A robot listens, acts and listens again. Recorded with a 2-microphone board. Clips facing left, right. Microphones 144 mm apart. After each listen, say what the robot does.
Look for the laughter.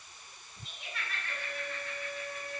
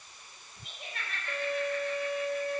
Turn 55° right.
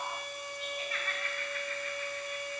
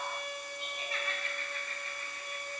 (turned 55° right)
Turn 30° right.
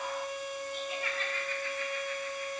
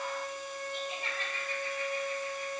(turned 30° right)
Turn 25° right.
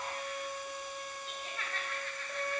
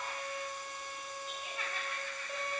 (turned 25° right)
Turn 10° right.
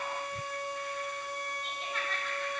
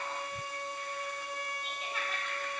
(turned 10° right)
Found it: laughter, straight ahead.